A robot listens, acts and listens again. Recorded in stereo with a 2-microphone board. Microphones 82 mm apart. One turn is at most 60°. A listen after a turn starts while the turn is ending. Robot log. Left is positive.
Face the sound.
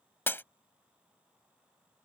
note: The breaking glass: about 25° left or 155° left.
cmd yaw +25
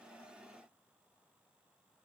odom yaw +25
cmd idle
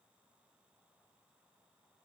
end: I heard breaking glass, but can't make it out now. It was about straight ahead or 130° left.